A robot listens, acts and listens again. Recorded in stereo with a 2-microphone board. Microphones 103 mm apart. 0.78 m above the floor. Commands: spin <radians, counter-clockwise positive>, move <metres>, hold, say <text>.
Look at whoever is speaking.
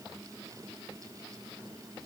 hold
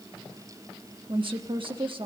spin -0.96
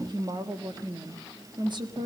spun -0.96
spin -0.96
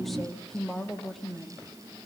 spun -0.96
say Found it: a woman speaking, straight ahead, 1 to 2 m away.